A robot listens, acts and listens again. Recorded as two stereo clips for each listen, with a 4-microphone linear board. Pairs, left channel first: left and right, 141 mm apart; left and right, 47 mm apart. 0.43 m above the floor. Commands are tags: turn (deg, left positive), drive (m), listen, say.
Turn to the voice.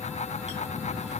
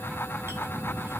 <listen/>
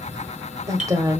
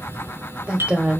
<turn deg="-25"/>
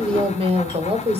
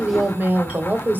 <turn deg="-130"/>
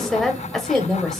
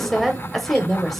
<say>Facing the woman speaking, 1 to 2 m away.</say>